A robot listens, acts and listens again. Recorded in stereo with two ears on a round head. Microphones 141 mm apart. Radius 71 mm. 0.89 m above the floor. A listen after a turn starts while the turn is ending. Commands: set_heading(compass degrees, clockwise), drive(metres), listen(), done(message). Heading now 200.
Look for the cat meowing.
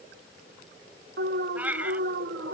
set_heading(230)
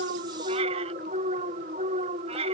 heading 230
set_heading(5)
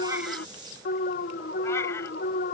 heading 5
listen()
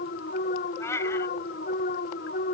set_heading(350)
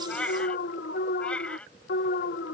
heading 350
set_heading(340)
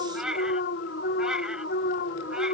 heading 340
done("Facing the cat meowing.")